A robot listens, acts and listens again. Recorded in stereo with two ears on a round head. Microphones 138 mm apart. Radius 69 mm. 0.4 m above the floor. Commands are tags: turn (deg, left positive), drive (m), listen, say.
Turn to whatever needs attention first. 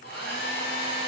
<listen/>
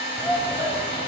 <turn deg="25"/>
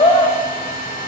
<turn deg="130"/>
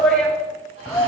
<say>Facing the shout, 1 to 2 m away.</say>